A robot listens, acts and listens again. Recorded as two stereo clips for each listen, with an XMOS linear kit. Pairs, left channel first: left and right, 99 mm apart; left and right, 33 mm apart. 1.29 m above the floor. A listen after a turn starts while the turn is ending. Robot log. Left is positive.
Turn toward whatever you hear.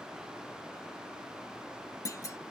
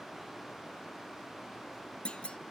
note: The clunk: about 35° left or 145° left.
cmd yaw +35
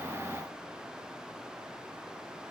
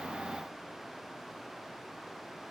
cmd idle
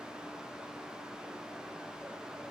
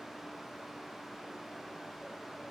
end: I heard a clunk, but can't make it out now. It was about straight ahead or 110° left.